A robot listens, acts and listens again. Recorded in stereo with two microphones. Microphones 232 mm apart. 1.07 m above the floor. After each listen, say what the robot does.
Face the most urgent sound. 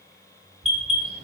Turn 25° right.
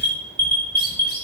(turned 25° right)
Turn 130° right.
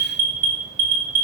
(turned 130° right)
Turn 35° right.
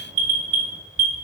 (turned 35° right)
Turn 25° right.
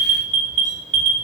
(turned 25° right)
Turn 25° right.
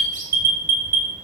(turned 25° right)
Turn 10° right.
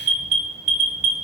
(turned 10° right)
Found it: an alarm, straight ahead, 2 to 4 m away.